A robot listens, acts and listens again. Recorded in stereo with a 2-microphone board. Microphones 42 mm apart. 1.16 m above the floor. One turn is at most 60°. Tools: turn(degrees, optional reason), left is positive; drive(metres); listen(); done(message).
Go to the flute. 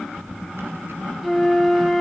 turn(degrees=30)
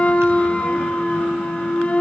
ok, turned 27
turn(degrees=60, reason="So it is at 150° left.")
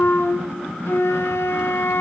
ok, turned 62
turn(degrees=60, reason="The flute is now 85° left.")
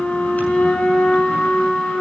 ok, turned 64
turn(degrees=25, reason="The flute is now 25° left.")
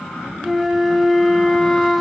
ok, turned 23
drive(metres=1.0)
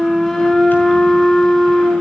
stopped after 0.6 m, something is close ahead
turn(degrees=10, reason="The flute is now 10° left.")
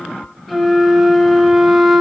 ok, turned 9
done("Blocked. The flute is further on, straight ahead.")